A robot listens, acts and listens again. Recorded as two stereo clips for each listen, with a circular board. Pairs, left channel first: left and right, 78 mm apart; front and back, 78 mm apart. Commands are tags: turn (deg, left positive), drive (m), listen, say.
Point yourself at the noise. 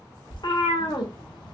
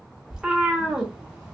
<turn deg="100"/>
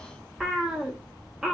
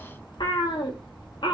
<say>Facing the cat meowing.</say>